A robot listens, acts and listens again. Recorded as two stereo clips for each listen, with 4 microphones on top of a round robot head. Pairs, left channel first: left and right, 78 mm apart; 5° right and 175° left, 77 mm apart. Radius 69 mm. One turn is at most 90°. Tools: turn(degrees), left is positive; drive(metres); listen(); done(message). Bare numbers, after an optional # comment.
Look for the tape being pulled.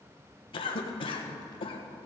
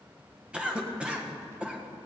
listen()
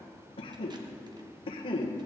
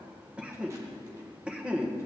listen()
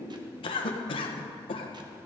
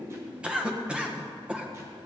done("I can't make out tape being pulled to turn to.")